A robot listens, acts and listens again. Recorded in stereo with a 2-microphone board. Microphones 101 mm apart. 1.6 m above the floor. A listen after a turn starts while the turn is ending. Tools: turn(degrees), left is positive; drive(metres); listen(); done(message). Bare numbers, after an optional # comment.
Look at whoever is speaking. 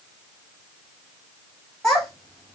turn(30)
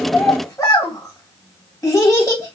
# So it is at 140° left.
turn(140)
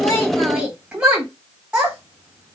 # The child speaking is now 15° right.
turn(-15)
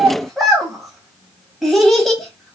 done("Facing the child speaking.")